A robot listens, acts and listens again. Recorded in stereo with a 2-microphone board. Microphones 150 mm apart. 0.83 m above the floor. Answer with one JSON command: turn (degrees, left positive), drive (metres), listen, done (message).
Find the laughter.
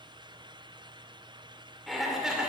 {"turn": -30}
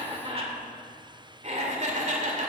{"turn": -125}
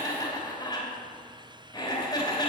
{"turn": 25}
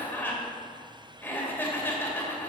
{"turn": 10}
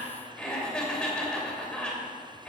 {"done": "Found it: laughter, straight ahead."}